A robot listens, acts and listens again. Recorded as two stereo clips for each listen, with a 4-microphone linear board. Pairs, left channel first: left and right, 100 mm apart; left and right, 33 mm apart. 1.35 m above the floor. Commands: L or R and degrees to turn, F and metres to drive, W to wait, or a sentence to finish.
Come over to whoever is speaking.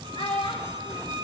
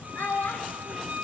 L65
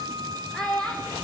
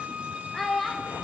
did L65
F1.0
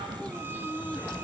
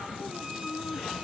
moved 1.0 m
W
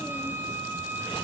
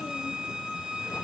W
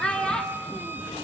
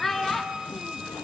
L10
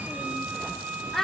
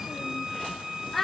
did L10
F1.0
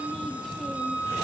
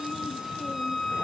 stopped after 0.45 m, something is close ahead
W
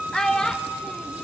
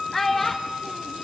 I am next to the child speaking.